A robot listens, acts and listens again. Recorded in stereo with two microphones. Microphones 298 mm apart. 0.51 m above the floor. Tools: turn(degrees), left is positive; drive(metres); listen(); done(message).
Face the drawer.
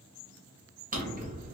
turn(degrees=-30)
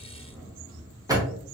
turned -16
turn(degrees=-10)
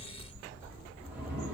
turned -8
done("Found it: a drawer, straight ahead.")